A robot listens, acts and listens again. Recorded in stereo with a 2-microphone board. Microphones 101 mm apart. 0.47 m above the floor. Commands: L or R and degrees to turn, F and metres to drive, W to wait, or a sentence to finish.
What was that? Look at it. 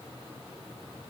W
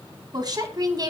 R40
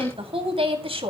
R110
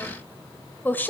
L20
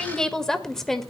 Facing the woman speaking.